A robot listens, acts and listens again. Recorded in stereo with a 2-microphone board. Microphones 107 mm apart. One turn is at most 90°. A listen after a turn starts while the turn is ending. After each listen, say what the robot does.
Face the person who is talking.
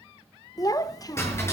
Turn 35° left.
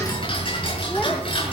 Keep listening.
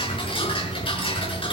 Keep listening.
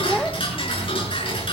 I heard a child speaking, but can't make it out now. It was about straight ahead or 110° left.